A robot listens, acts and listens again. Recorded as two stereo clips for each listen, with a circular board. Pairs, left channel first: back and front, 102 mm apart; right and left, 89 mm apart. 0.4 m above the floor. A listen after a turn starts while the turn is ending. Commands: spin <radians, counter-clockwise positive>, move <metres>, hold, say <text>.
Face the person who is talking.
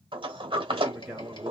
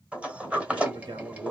spin 1.40
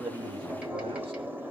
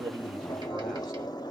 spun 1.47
hold
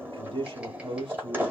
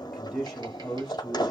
say Found it: a man speaking, straight ahead.